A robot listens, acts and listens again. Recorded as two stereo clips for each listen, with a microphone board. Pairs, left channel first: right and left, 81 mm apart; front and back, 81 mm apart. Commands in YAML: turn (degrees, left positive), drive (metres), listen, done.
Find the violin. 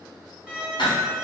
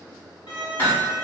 turn: 10
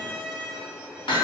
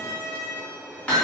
done: "Facing the violin, 1 to 2 m away."